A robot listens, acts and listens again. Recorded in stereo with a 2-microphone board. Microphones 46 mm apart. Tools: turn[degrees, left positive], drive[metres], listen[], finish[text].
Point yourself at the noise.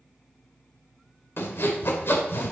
Thought: The sawing: about 60° left or 120° left.
Action: turn[60]
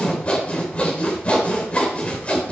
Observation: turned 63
Thought: So it is at 35° left.
Action: turn[35]
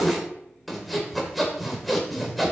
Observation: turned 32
Action: finish[Found it: sawing, straight ahead, 2 to 4 m away.]